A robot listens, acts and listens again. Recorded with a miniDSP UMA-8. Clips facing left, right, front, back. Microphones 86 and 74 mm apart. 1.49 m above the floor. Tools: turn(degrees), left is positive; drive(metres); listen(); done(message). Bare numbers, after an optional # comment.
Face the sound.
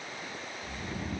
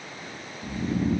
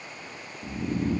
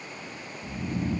# The snoring: 30° right.
turn(-30)
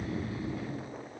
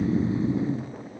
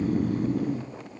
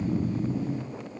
# The snoring is now 25° right.
turn(-25)
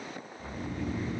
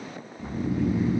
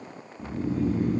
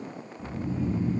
# The snoring is now 15° right.
turn(-15)
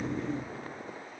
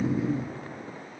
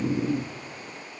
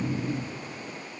done("Facing the snoring, 1 to 2 m away.")